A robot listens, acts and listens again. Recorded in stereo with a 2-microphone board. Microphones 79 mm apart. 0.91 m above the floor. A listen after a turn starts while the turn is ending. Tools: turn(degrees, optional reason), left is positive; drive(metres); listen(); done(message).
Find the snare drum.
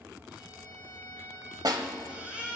turn(degrees=-55, reason="The snare drum: about 55° right or 125° right.")
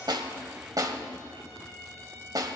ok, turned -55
turn(degrees=-60, reason="So it is at 60° right.")
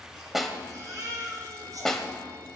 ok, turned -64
done("Found it: a snare drum, straight ahead.")